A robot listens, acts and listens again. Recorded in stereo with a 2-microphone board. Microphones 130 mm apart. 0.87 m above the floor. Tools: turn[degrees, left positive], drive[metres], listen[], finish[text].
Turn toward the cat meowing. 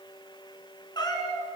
Thought: The cat meowing: about 30° left or 150° left.
Action: turn[30]
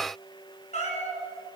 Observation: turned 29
Thought: So it is at 115° left.
Action: turn[115]
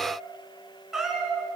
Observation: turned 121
Action: finish[Facing the cat meowing, 2 to 4 m away.]